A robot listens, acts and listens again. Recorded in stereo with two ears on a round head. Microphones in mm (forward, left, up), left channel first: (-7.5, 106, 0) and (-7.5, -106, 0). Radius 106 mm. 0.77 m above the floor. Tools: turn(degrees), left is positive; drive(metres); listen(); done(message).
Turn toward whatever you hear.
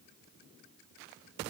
listen()
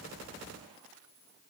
listen()
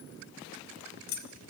turn(degrees=60)
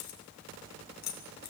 turn(degrees=70)
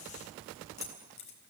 turn(degrees=30)
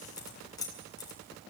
turn(degrees=15)
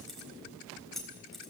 done("Facing the keys jangling.")